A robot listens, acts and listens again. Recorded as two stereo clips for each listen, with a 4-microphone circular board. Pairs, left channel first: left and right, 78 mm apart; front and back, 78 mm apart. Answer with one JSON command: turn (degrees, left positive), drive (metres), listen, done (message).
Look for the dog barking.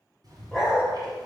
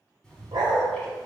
{"turn": -170}
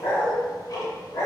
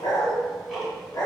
{"turn": 40}
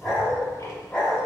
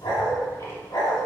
{"turn": 15}
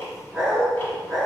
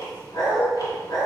{"done": "Facing the dog barking."}